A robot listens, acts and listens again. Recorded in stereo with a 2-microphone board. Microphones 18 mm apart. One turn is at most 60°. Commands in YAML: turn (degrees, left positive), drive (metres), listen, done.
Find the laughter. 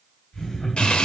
turn: 40
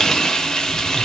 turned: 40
listen: true
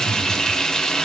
listen: true
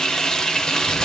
done: "I heard laughter, but can't make it out now. It was about straight ahead or 100° left."